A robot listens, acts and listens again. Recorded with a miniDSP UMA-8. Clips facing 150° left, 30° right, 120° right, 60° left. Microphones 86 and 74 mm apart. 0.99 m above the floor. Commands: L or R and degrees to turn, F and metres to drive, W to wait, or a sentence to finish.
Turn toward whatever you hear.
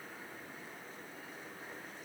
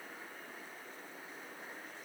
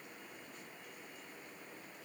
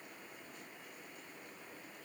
W
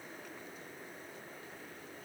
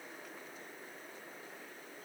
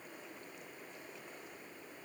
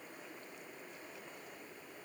W
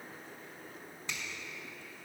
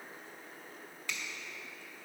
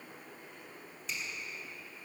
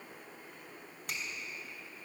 L85
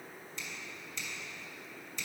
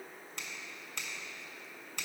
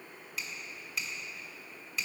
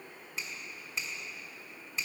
Found it: a finger snap, straight ahead.